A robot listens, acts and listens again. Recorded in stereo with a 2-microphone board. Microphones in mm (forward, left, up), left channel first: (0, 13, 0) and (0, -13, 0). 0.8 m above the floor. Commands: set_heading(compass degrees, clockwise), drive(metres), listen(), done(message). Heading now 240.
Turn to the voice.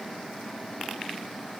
listen()
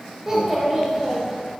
set_heading(265)
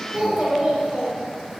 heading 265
set_heading(30)
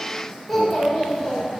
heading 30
set_heading(20)
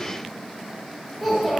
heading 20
done("Found it: a child speaking, straight ahead.")